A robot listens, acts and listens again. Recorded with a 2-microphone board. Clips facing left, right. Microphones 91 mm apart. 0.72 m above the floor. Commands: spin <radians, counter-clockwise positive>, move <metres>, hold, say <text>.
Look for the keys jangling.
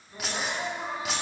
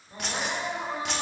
spin 0.52
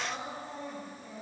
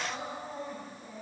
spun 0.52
hold
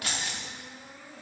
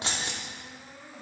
spin -0.52
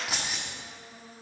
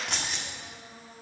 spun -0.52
say Found it: keys jangling, straight ahead.